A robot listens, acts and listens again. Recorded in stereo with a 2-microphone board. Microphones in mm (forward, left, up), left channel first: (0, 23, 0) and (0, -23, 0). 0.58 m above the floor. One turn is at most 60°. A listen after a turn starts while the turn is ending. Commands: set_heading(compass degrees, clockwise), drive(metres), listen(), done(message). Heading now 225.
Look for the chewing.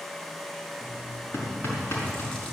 set_heading(195)
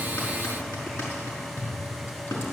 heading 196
listen()
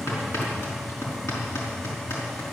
listen()
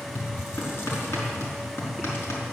done("I heard chewing, but can't make it out now. It was about 15° right or 140° left.")